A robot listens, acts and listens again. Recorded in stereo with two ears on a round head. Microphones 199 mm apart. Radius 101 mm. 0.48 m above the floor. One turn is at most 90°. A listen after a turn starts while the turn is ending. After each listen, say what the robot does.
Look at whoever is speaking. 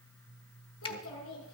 Turn 65° left.
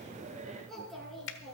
Found it: a child speaking, straight ahead.